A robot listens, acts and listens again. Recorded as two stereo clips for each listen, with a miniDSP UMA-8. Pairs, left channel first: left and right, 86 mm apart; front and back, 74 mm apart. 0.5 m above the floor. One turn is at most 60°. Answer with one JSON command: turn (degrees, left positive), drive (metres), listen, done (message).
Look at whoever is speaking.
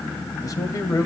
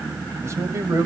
{"turn": 60}
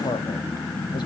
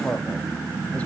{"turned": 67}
{"turn": 60}
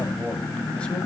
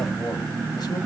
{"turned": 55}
{"turn": 15}
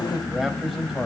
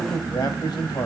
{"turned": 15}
{"done": "Found it: a man speaking, straight ahead, 2 to 4 m away."}